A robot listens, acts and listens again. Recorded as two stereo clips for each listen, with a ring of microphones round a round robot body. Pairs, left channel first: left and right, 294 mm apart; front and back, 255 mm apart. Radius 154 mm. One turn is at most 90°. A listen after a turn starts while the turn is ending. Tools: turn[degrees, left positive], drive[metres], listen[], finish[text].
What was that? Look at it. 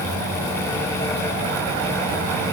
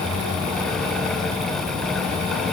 Action: listen[]
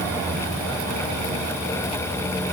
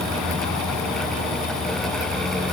Action: listen[]
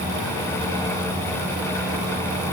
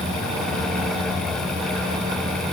Action: finish[I can't make out anything to turn to.]